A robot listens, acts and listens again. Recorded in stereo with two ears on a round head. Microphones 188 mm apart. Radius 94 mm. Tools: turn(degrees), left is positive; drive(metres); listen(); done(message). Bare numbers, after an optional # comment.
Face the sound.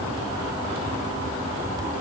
listen()
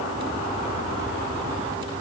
listen()
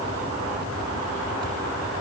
done("I can't make out anything to turn to.")